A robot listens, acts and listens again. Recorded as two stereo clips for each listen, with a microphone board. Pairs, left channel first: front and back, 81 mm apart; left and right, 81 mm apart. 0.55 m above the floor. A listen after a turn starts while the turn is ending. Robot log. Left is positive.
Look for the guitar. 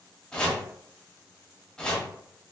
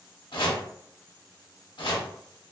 cmd idle
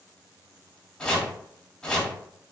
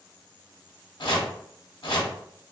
cmd idle
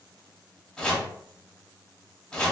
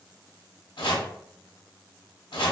end: I can't make out a guitar, only chopping.